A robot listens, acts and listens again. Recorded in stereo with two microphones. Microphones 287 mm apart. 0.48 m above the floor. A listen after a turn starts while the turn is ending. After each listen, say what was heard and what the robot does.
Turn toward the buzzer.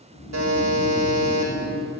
The buzzer: about 70° right or 110° right. Turn 70° right.
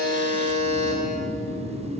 So it is at 25° right. Turn 25° right.
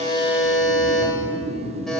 Facing the buzzer.